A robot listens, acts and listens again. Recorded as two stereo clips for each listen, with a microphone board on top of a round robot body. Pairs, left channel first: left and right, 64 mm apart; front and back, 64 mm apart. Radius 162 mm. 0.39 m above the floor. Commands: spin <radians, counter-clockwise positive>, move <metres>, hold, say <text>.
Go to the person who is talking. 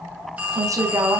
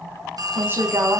spin -2.18
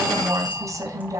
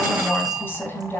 spin -0.96
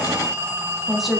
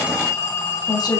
move 1.0
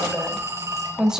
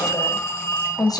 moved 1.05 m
spin -0.17
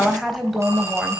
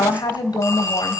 move 1.0
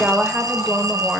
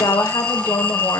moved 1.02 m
spin -0.17
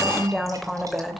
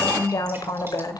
move 1.0
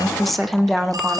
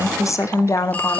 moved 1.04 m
move 1.0
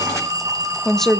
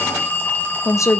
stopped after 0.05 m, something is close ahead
say I am next to the woman speaking.